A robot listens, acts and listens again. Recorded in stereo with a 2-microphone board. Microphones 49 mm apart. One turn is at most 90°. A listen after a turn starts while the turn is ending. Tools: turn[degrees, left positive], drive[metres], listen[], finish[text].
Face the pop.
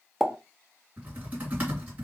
Action: turn[30]
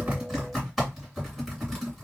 Action: listen[]
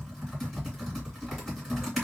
Action: finish[I heard a pop, but can't make it out now. It was about 30° right or 150° left.]